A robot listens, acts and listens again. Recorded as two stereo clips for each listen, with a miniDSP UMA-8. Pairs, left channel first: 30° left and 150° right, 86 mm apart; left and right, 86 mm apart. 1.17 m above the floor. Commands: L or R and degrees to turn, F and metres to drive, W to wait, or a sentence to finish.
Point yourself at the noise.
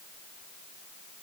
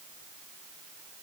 W
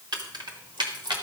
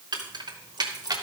R125
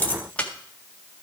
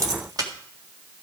R45
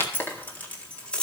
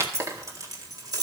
R50
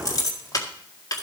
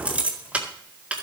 R15
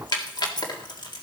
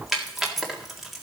Facing the keys jangling, 1 to 2 m away.